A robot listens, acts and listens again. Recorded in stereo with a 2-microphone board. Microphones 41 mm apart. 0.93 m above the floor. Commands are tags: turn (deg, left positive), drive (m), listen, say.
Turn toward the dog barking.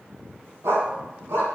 <turn deg="-90"/>
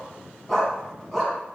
<say>Found it: a dog barking, straight ahead, 2 to 4 m away.</say>